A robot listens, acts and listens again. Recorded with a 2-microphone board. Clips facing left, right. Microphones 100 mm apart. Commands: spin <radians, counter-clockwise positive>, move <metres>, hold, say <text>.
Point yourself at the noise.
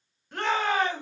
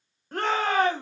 spin -0.70
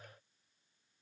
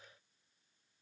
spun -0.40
hold
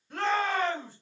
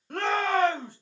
spin -2.01
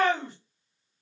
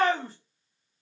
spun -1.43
spin -0.61
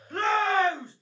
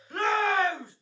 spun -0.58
say Facing the shout.